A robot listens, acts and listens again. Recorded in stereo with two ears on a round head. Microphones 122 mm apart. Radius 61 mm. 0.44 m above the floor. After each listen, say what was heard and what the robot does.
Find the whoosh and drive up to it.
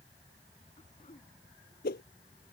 Turn 90° left.
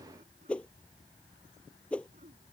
So it is at 10° left. Turn 10° left.
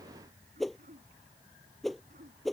Drive 1.0 m forward.
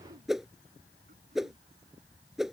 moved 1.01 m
Drive 1.0 m forward.
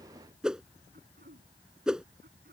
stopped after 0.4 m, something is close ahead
I am next to the whoosh.